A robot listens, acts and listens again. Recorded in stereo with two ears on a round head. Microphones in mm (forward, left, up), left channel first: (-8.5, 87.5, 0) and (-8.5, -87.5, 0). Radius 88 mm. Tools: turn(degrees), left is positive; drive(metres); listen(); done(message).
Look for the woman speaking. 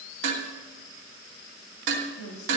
turn(degrees=90)
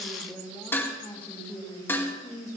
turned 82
turn(degrees=20)
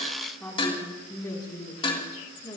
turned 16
turn(degrees=20)
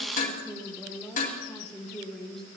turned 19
done("Facing the woman speaking, 2 to 4 m away.")